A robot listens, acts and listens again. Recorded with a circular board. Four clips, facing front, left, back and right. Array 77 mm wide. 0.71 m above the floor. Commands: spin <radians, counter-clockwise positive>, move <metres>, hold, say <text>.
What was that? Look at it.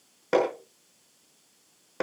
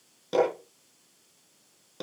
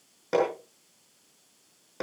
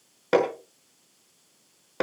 spin -1.13
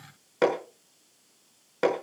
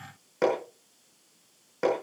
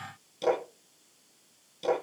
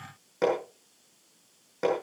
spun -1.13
say Facing the hammering.